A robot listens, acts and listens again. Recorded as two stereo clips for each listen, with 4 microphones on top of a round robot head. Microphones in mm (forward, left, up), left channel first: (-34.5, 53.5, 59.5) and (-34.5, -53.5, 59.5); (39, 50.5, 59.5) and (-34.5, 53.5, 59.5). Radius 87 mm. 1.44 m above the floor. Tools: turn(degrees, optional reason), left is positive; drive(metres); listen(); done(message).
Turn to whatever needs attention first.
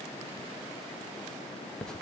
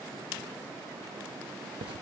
listen()
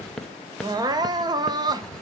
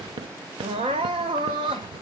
turn(degrees=-140, reason="The crying: 140° right.")
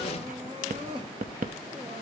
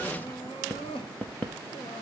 turn(degrees=-35, reason="The crying is now 35° right.")
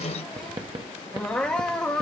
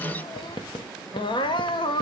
done("Found it: crying, straight ahead, under 1 m away.")